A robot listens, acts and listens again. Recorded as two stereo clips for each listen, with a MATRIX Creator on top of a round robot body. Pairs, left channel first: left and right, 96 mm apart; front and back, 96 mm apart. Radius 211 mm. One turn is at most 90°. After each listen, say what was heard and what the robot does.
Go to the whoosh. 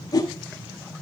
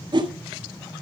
The whoosh: 140° left. Turn 90° left.
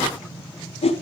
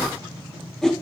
The whoosh is now 85° left. Turn 85° left.
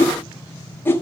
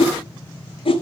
The whoosh is now 20° left. Turn 20° left.
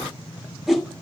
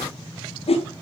Drive 1.0 m forward.
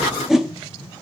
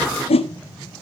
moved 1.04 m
Drive 1.0 m forward.
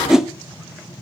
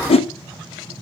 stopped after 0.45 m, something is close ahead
I am next to the whoosh.